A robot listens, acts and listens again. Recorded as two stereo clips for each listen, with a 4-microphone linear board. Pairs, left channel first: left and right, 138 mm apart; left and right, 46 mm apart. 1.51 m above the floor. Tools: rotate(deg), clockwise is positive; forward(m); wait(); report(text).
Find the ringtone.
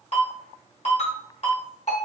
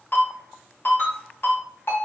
rotate(-50)
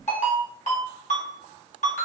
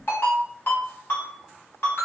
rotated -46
rotate(-75)
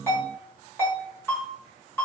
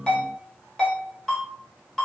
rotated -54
rotate(-20)
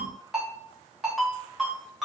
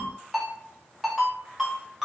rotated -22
report("Facing the ringtone, 1 to 2 m away.")